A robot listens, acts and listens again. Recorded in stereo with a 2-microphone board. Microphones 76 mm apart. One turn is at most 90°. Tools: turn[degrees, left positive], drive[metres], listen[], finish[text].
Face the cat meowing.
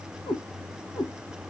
Action: turn[90]
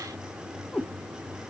Thought: So it is at 20° left.
Action: turn[20]
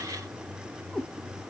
Action: finish[Found it: a cat meowing, straight ahead, 1 to 2 m away.]